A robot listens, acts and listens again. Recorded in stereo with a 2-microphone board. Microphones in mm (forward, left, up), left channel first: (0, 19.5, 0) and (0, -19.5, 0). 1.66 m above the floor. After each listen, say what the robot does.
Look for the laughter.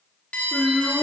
Turn 20° left.
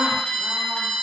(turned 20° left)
Keep listening.
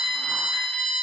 Keep listening.
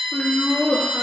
Turn 30° left.
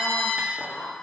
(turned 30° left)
Turn 130° left.
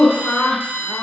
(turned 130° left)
Turn 25° left.
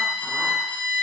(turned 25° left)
Keep listening.
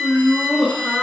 Found it: laughter, straight ahead, 1 to 2 m away.